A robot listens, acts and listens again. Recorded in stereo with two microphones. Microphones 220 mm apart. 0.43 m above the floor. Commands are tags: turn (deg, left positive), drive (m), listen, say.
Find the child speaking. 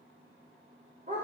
<listen/>
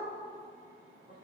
<listen/>
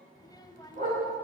<turn deg="20"/>
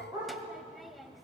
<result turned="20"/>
<say>Facing the child speaking.</say>